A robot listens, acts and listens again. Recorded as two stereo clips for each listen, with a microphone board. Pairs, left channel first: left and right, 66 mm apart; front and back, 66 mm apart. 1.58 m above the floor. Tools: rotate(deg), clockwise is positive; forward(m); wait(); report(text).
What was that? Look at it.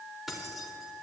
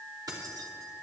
rotate(175)
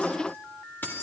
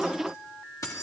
rotate(-35)
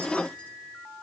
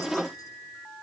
wait()
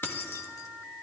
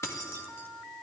rotate(-50)
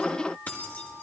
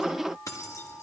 rotate(-30)
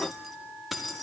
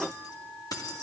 report("Found it: keys jangling, straight ahead, 1 to 2 m away.")